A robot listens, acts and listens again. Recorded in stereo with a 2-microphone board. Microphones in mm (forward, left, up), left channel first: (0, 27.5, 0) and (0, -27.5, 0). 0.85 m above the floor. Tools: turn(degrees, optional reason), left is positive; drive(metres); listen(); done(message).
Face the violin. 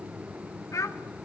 listen()
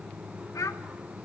listen()
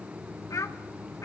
done("I can't make out a violin to turn to.")